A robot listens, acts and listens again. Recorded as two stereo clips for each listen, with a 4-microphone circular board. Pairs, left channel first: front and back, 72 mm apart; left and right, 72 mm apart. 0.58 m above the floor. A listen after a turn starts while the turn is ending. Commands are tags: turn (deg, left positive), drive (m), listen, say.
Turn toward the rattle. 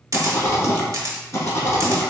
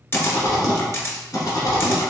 <turn deg="50"/>
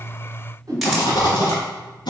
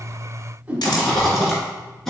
<say>Found it: a rattle, straight ahead.</say>